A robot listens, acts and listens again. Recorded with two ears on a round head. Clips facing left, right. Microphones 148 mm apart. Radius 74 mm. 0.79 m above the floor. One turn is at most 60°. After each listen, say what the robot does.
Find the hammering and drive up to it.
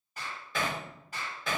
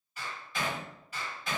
Turn 60° left.
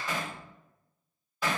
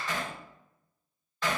Turn 10° left.
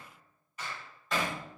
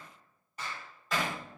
Drive 1.0 m forward.
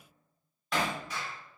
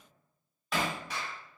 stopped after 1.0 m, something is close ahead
I am next to the hammering.